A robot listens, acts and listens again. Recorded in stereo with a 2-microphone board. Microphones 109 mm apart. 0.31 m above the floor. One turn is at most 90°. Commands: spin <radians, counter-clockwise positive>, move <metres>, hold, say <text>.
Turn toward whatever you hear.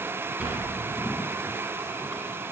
spin -0.52
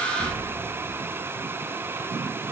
spin -1.57
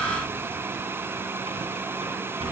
spin -1.31
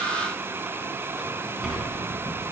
say Found it: a sliding door, straight ahead.